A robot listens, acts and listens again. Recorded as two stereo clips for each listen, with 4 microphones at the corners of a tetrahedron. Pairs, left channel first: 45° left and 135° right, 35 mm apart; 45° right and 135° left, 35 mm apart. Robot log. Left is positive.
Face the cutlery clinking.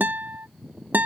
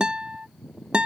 cmd idle
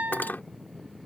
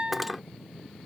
note: The cutlery clinking: 50° left.
cmd yaw +50
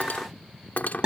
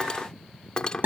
note: The cutlery clinking is now 20° left.
cmd yaw +20
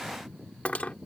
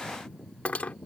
end: Facing the cutlery clinking.